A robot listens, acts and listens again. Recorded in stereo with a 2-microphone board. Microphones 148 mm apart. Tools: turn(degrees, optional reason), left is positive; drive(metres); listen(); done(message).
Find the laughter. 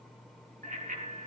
listen()
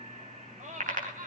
turn(degrees=-65, reason="The laughter: about 65° right or 115° right.")
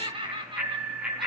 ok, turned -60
turn(degrees=-35, reason="So it is at 35° right.")
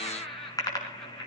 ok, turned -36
done("Found it: laughter, straight ahead.")